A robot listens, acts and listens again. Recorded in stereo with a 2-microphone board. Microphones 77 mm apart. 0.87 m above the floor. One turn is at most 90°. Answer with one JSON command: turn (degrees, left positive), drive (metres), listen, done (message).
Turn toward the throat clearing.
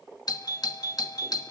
{"listen": true}
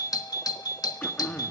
{"turn": 20}
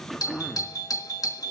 {"done": "Found it: throat clearing, straight ahead, 1 to 2 m away."}